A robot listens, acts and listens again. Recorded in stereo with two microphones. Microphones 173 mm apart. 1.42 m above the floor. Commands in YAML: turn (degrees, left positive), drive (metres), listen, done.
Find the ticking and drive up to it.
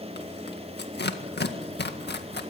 listen: true
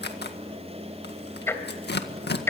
turn: 30
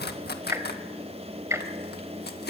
turn: -15
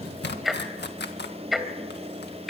drive: 1.0
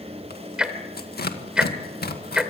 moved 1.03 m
drive: 1.0
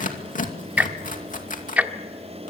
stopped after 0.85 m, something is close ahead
turn: -10
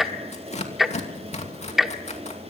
done: "Arrived at the ticking, straight ahead."